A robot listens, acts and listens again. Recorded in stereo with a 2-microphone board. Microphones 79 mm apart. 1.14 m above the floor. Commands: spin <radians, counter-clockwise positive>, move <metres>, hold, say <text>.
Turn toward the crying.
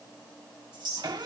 hold
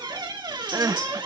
spin -0.79
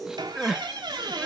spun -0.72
spin -0.17
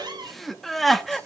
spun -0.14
say Found it: crying, straight ahead.